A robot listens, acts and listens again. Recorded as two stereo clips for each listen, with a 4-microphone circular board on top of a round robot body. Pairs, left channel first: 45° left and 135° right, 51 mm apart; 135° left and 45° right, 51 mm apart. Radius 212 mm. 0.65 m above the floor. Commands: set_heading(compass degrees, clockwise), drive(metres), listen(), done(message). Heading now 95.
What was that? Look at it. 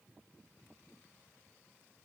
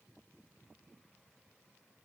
listen()
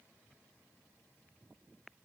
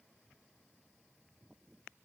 listen()
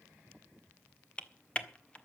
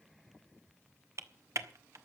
set_heading(120)
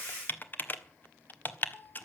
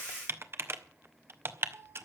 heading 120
done("Facing the typing on a keyboard, 1 to 2 m away.")